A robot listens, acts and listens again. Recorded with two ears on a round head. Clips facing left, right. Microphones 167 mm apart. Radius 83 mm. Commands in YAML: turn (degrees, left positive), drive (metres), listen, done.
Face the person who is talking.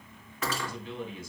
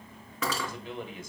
turn: -45
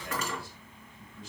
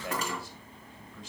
turn: -80
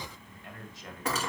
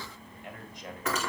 turn: -15
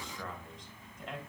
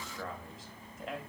done: "Facing the man speaking, 2 to 4 m away."